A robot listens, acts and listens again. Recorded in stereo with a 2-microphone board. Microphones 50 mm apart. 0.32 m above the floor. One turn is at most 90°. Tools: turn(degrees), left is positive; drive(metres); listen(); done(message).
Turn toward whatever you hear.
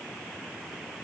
listen()
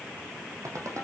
turn(degrees=-70)
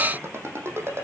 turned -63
turn(degrees=-50)
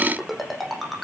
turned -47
done("Found it: a ringtone, straight ahead, over 4 m away.")